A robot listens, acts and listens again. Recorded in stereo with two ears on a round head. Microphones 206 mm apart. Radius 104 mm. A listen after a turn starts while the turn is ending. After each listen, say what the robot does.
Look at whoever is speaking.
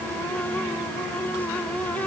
Keep listening.
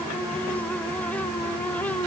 Keep listening.
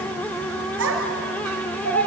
Turn 65° right.
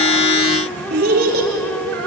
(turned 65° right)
Turn 45° right.
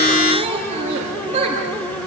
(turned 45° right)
Turn 30° right.
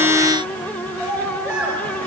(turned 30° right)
Found it: a child speaking, straight ahead, 2 to 4 m away.